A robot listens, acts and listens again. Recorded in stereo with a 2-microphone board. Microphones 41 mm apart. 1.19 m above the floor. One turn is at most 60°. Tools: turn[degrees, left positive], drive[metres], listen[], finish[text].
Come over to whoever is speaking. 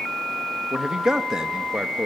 Thought: The man speaking: about 15° right or 165° right.
Action: turn[-15]
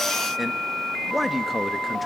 Action: drive[1.0]
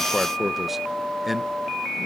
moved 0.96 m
Action: drive[1.0]
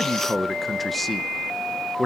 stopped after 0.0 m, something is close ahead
Action: finish[Arrived at the man speaking, straight ahead.]